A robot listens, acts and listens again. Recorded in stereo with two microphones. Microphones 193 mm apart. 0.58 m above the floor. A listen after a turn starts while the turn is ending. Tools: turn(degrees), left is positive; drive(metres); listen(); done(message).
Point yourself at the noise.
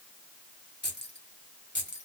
turn(degrees=75)
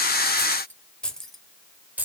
turn(degrees=-10)
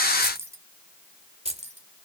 turn(degrees=-35)
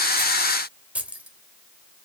done("Facing the keys jangling, 1 to 2 m away.")